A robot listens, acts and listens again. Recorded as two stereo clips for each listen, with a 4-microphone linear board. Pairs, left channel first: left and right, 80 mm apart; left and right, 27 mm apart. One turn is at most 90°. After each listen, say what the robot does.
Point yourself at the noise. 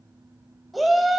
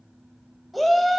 Turn 30° left.
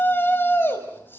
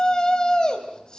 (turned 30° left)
Turn 90° left.
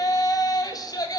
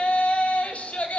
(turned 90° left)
Turn 60° left.
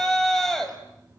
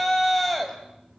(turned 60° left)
Found it: a shout, straight ahead.